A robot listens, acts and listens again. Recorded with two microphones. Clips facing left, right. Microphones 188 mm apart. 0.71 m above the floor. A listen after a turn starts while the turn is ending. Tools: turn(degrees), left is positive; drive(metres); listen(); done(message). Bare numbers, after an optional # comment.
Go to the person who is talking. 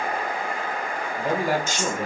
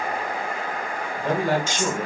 turn(30)
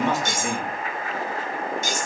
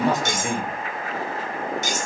# So it is at 20° right.
turn(-20)
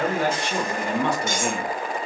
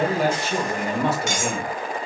drive(1.0)
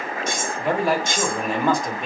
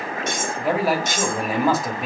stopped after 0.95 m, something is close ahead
done("Arrived at the man speaking, straight ahead.")